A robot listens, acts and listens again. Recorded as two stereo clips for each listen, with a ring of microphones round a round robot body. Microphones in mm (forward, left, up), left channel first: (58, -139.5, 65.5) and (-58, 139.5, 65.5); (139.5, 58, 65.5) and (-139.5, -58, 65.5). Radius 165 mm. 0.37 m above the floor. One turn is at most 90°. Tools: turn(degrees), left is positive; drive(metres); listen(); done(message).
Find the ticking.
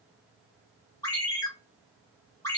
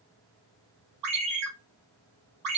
listen()
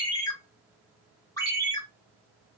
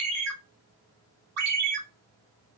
listen()
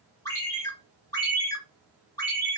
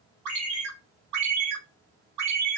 done("I can't make out ticking to turn to.")